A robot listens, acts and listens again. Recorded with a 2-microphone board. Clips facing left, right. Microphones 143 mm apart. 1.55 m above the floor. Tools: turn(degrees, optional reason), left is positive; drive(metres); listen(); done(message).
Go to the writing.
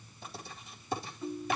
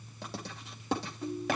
turn(degrees=-90)
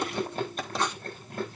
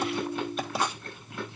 turn(degrees=-10, reason="So it is at 10° right.")
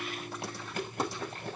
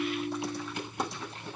listen()
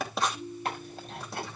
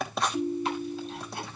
drive(metres=1.0)
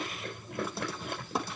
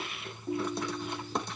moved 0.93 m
drive(metres=1.0)
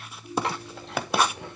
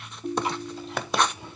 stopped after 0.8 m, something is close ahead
done("I am next to the writing.")